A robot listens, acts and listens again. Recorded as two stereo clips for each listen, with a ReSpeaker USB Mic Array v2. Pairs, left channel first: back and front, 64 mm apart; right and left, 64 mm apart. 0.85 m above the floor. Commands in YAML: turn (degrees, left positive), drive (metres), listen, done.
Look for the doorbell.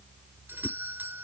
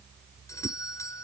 turn: -60
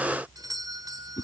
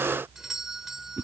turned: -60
done: "Facing the doorbell."